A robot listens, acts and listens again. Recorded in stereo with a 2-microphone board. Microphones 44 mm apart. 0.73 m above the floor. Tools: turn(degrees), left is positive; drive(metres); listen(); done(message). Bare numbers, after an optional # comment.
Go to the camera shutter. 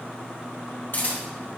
# The camera shutter: about 60° left or 120° left.
turn(60)
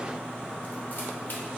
listen()
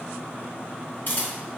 # So it is at 50° left.
turn(50)
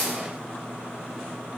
# The camera shutter is now 10° right.
turn(-10)
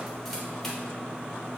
listen()
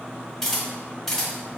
drive(1.0)
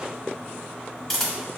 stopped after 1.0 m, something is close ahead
done("Arrived at the camera shutter, straight ahead.")